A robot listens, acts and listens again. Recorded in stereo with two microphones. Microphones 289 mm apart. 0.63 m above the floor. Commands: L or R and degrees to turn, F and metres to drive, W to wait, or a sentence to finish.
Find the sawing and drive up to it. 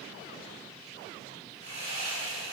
R70
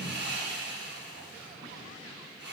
R40
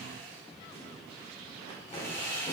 L10
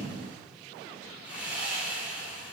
F1.0
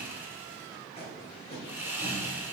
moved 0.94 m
R10
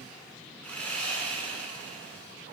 F1.0
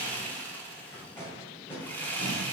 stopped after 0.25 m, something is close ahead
I am next to the sawing.